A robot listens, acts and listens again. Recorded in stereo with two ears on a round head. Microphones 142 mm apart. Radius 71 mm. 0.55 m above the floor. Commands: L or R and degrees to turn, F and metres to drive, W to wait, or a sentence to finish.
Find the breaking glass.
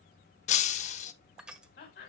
L45
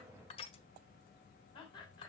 W
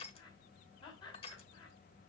I heard breaking glass, but can't make it out now. It was about straight ahead or 90° left.